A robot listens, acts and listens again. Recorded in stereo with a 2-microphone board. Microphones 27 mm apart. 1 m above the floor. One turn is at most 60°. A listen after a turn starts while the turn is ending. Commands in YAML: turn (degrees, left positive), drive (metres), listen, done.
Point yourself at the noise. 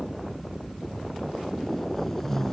turn: 30
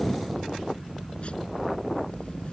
listen: true
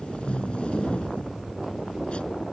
turn: 60
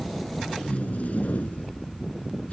turn: 60
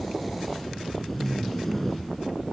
turn: 10
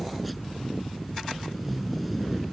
done: "Found it: tape being pulled, straight ahead."